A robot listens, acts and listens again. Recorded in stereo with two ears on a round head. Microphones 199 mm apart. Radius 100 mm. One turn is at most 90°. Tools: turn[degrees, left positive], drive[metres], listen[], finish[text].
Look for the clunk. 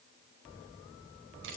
Action: listen[]
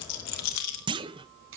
Thought: The clunk: about 20° right or 160° right.
Action: turn[-20]
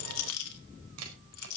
Action: listen[]
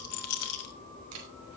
Action: finish[I heard a clunk, but can't make it out now. It was about straight ahead or 140° right.]